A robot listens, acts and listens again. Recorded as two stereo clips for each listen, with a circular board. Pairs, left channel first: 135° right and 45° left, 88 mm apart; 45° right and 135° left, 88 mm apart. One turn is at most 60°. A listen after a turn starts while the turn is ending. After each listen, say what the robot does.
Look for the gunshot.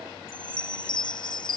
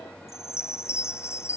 Keep listening.
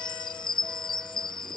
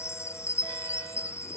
Keep listening.
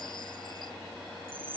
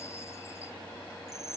I can't make out a gunshot, only a chime.